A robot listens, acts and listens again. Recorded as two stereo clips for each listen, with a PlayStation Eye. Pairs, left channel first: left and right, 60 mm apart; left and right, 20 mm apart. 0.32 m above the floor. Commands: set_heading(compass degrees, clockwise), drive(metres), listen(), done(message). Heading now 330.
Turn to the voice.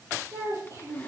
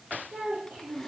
set_heading(60)
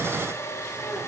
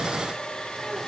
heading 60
listen()
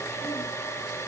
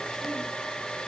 listen()
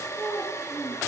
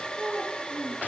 set_heading(75)
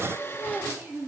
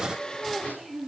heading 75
done("Facing the child speaking, over 4 m away.")